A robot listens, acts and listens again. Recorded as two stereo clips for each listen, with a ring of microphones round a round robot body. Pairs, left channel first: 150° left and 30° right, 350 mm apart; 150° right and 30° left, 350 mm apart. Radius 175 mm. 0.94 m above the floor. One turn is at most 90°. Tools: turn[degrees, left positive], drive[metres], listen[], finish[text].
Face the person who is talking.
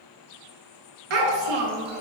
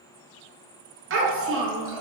Thought: The child speaking: 25° right.
Action: turn[-25]
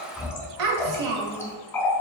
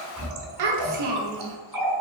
Thought: The child speaking is now 10° left.
Action: turn[10]
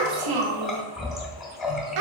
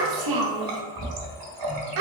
Action: finish[Found it: a child speaking, straight ahead, under 1 m away.]